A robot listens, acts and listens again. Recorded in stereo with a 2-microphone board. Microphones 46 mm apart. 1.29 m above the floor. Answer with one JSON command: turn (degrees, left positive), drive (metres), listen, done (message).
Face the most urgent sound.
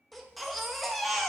{"turn": 30}
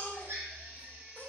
{"turn": 145}
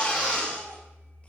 {"turn": 25}
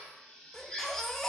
{"turn": 10}
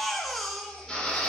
{"done": "Found it: a baby crying, straight ahead."}